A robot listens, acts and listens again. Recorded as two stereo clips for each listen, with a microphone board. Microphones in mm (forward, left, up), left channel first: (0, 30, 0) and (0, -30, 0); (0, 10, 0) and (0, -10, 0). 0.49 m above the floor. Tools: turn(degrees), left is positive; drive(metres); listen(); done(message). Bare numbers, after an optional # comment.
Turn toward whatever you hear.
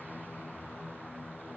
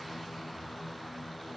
listen()
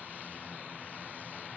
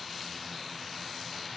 listen()
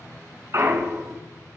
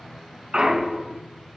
# The clunk: about 55° right or 125° right.
turn(-55)
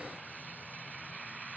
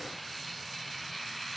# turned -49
listen()
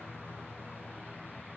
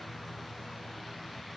done("I heard a clunk, but can't make it out now. It was about 5° right or 80° right.")